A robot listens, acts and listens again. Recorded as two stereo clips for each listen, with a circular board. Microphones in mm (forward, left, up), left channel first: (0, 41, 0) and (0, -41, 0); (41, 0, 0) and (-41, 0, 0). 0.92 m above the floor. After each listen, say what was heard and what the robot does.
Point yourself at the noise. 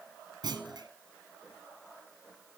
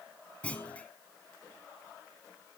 The clunk: 75° right. Turn 75° right.
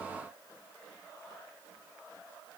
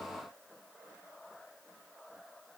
I heard a clunk from this way, but can't make it out now.